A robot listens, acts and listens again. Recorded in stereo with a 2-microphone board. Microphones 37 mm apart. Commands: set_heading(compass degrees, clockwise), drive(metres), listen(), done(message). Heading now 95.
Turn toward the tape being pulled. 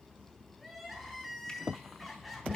listen()
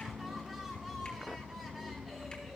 listen()
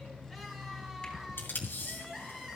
set_heading(25)
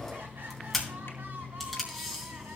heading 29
done("Found it: tape being pulled, straight ahead.")